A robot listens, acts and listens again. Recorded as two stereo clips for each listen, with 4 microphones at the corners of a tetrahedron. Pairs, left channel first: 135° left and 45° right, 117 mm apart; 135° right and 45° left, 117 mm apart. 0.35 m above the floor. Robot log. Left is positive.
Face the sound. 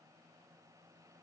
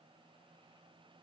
cmd idle
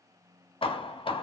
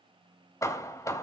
note: The hammering: 165° left.
cmd yaw +165
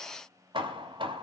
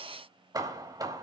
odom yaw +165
note: The hammering is now 10° right.
cmd yaw -10
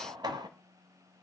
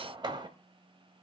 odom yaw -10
end: Found it: hammering, straight ahead, 1 to 2 m away.